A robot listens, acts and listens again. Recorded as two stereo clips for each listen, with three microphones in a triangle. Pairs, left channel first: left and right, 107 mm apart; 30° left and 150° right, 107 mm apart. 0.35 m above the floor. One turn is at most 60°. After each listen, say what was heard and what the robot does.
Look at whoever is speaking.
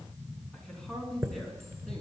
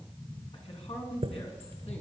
Found it: a man speaking, straight ahead.